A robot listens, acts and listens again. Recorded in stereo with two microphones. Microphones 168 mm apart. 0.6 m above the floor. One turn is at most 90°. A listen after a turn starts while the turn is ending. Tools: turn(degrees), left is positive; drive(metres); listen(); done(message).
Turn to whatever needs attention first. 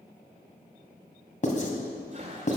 listen()
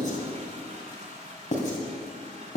listen()
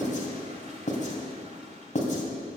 done("I can't make out anything urgent to turn to.")